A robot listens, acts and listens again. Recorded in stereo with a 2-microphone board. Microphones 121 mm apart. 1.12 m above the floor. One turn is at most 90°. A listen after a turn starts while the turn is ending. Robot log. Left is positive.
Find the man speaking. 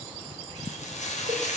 cmd idle
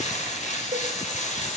cmd idle
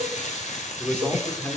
note: The man speaking: about 15° left or 165° left.
cmd yaw +15
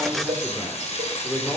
cmd yaw +30
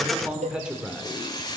end: Found it: a man speaking, straight ahead, 2 to 4 m away.